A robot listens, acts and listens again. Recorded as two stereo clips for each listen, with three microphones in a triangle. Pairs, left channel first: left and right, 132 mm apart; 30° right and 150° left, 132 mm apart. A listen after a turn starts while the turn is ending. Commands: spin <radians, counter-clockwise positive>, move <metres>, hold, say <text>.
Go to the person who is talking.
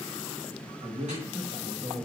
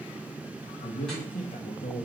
spin -0.79
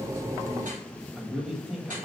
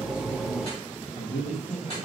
move 1.0
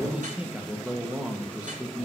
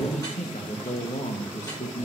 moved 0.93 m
spin -0.17
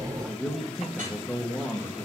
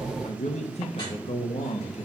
move 1.0
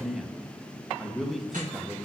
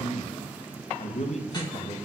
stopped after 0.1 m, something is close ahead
say Arrived at the man speaking, straight ahead.